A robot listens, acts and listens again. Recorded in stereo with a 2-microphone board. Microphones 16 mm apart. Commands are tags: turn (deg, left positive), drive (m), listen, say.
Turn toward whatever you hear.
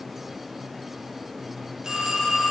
<turn deg="-35"/>
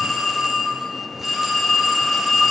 <say>Facing the phone ringing.</say>